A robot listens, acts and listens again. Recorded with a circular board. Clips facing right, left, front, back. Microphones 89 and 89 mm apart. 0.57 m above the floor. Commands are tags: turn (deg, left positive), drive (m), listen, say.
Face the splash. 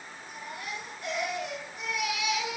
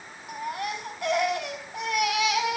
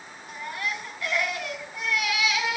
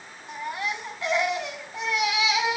<listen/>
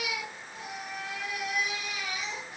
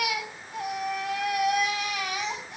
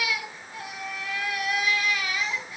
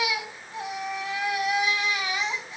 <listen/>
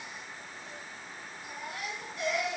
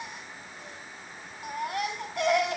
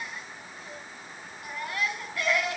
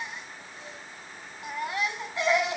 <say>I can't make out a splash to turn to.</say>